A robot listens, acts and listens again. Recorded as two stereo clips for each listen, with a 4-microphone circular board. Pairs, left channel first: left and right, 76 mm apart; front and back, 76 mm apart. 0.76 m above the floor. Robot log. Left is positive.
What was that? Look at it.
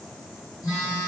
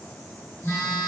note: The phone buzzing: 55° left.
cmd yaw +55
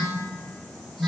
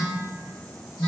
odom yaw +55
end: Found it: a phone buzzing, straight ahead, 1 to 2 m away.